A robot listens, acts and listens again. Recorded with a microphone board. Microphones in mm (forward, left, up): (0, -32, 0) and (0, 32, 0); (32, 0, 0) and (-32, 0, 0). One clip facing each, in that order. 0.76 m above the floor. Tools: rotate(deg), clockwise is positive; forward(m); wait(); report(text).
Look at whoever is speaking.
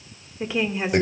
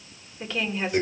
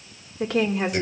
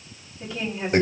rotate(15)
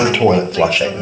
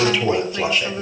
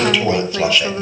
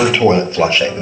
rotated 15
wait()
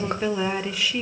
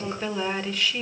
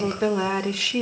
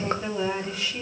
rotate(10)
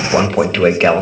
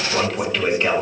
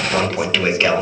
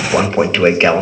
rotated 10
wait()
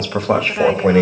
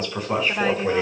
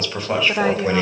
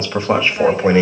report("Found it: a woman speaking, straight ahead.")